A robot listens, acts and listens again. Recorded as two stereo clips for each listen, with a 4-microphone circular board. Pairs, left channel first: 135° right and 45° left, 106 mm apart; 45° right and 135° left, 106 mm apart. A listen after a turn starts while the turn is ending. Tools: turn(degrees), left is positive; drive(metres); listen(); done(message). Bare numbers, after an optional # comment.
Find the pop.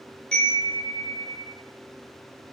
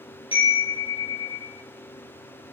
listen()
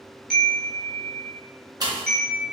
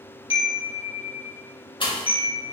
done("Facing the pop, under 1 m away.")